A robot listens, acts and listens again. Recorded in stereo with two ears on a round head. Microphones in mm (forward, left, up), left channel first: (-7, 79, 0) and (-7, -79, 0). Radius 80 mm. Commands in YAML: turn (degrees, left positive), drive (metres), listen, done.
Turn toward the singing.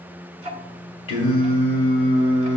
turn: 40
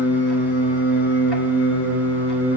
turn: 90
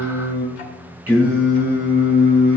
turn: -10
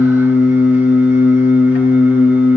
done: "Facing the singing, over 4 m away."